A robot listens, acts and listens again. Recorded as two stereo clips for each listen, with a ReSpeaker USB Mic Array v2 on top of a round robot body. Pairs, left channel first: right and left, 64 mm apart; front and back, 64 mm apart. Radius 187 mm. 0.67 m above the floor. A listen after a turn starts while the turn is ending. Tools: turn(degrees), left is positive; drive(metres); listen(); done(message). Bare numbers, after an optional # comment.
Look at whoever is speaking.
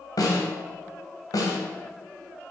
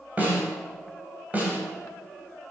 listen()
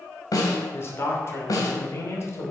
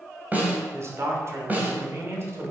# The man speaking: 135° right.
turn(-135)
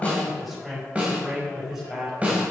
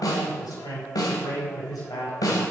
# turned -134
done("Found it: a man speaking, straight ahead.")